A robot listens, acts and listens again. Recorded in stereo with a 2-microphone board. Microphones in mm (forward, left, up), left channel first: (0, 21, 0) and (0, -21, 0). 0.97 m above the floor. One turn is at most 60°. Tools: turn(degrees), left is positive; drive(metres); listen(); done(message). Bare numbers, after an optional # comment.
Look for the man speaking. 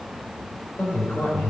# The man speaking: about 45° left or 135° left.
turn(45)
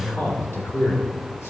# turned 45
# So it is at 100° left.
turn(60)
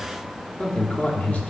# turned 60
# The man speaking is now 40° left.
turn(40)
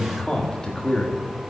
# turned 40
# The man speaking is now 25° left.
turn(25)
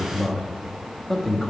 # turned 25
done("Found it: a man speaking, straight ahead, 1 to 2 m away.")